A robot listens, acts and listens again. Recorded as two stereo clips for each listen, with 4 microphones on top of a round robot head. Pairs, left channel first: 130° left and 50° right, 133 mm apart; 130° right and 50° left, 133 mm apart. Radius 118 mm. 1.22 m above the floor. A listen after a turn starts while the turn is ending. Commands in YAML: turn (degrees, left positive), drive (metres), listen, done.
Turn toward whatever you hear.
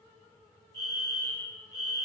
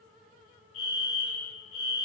turn: -165
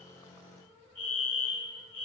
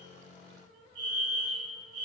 done: "Found it: a fire alarm, straight ahead, 2 to 4 m away."